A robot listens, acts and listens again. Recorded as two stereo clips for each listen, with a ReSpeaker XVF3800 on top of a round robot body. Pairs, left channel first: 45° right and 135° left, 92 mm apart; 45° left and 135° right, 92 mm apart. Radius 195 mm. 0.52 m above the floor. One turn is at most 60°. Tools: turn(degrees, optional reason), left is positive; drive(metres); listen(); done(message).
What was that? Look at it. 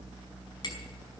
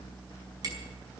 turn(degrees=-60, reason="The hammering: 90° right.")
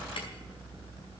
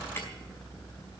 turn(degrees=-30, reason="Nothing new. It was at 30° right.")
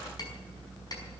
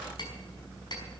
done("Found it: hammering, straight ahead, over 4 m away.")